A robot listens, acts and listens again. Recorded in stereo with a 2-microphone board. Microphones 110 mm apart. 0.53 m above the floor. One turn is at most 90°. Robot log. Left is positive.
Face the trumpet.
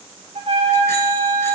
note: The trumpet: about 60° right or 120° right.
cmd yaw -60
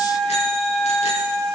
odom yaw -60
end: Facing the trumpet, 2 to 4 m away.